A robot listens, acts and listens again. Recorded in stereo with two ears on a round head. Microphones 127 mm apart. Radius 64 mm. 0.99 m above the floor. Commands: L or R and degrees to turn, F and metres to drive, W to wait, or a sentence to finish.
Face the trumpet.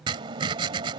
W
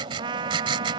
R35
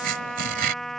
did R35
Found it: a trumpet, straight ahead.